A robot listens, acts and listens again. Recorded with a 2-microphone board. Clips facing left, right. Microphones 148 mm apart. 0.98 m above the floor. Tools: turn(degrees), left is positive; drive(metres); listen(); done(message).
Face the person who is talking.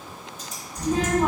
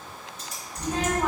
turn(degrees=30)
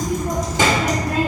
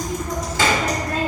turn(degrees=30)
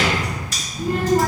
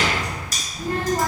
turn(degrees=30)
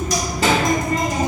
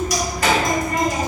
turn(degrees=30)
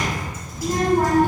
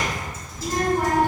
turn(degrees=150)
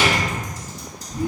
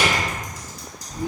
turn(degrees=-35)
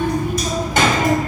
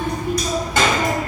turn(degrees=10)
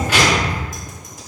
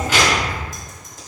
done("Found it: a child speaking, straight ahead.")